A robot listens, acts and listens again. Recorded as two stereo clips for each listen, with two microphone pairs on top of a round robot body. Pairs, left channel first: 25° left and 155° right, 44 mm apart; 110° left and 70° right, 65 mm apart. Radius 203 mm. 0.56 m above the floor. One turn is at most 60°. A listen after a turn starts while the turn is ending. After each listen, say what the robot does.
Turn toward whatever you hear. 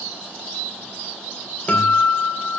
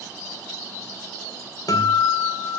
Turn 60° left.
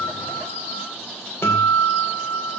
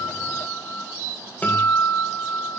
Turn 45° left.
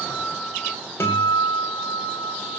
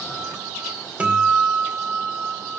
Facing the guitar.